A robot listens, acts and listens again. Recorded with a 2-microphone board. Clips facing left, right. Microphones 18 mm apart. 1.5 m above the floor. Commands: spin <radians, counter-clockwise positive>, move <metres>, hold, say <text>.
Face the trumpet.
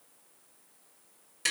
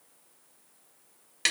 hold
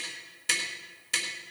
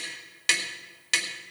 hold
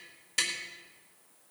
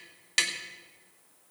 say I can't make out a trumpet, only tapping.